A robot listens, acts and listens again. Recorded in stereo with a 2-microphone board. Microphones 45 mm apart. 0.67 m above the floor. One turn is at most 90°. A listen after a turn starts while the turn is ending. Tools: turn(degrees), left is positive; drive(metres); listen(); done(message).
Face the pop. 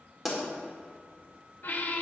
turn(degrees=30)
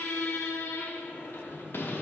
listen()
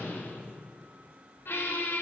done("I heard a pop, but can't make it out now. It was about 30° right or 150° left.")